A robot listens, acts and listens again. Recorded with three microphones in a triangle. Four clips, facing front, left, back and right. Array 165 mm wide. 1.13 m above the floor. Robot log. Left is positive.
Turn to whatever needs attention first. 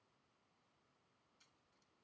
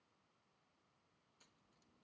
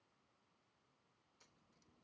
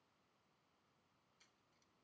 cmd idle
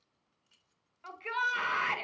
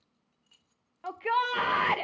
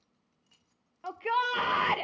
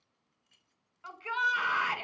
note: The shout: 125° left.
cmd yaw +125
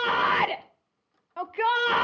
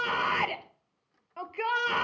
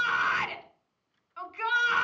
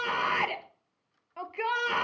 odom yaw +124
end: Found it: a shout, straight ahead, 1 to 2 m away.